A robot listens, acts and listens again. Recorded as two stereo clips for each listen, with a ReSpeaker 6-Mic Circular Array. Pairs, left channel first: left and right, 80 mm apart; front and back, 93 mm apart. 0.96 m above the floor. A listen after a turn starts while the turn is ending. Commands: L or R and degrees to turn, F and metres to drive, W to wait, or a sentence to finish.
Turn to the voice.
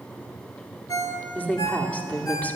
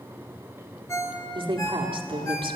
L160
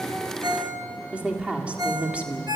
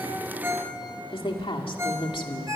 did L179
R15
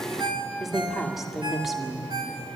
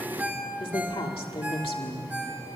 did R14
Facing the woman speaking, 2 to 4 m away.